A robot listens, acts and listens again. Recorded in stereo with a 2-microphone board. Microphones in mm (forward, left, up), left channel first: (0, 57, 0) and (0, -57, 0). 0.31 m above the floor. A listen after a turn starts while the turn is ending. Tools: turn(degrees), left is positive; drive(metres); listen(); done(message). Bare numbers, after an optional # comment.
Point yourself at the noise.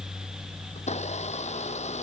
turn(90)
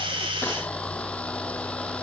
# So it is at 10° left.
turn(10)
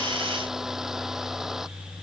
done("Facing the blender.")